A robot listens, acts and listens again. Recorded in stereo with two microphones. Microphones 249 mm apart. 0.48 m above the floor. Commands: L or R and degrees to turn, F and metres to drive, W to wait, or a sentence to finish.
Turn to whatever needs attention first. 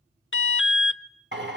L55
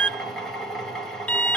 Found it: an alarm, straight ahead, under 1 m away.